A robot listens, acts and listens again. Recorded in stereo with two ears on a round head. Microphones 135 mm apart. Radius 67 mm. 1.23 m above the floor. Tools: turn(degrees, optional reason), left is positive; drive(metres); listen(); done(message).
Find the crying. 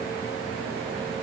listen()
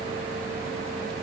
listen()
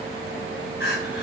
turn(degrees=90)
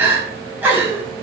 turn(degrees=-10, reason="So it is at 10° right.")
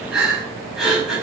done("Found it: crying, straight ahead.")